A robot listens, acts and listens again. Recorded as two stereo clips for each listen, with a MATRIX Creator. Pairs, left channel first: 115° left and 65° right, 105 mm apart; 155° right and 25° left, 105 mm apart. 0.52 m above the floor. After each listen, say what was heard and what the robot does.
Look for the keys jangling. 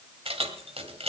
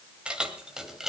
The keys jangling: 65° right. Turn 65° right.
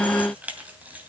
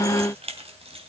Facing the keys jangling, 2 to 4 m away.